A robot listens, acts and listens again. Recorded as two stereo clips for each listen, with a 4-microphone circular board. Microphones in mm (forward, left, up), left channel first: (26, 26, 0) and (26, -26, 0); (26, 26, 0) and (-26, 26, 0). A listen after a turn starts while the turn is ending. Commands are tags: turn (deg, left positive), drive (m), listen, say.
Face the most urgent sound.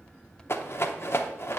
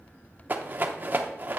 <listen/>
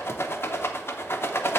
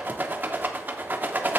<listen/>
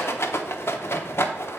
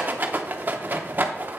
<say>I can't make out anything urgent to turn to.</say>